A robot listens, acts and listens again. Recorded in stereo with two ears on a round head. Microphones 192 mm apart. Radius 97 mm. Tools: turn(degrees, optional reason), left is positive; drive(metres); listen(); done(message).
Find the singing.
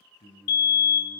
turn(degrees=30, reason="The singing: about 30° left or 150° left.")
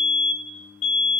turn(degrees=130, reason="So it is at 130° left.")
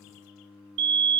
turn(degrees=30, reason="The singing is now 30° left.")
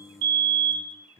turn(degrees=15, reason="The singing is now 15° left.")
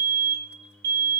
done("Facing the singing.")